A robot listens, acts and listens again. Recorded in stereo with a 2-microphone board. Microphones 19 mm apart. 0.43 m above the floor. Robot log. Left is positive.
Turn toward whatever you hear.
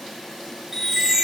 note: The chime: about 20° right or 160° right.
cmd yaw -20
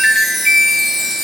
end: Facing the chime.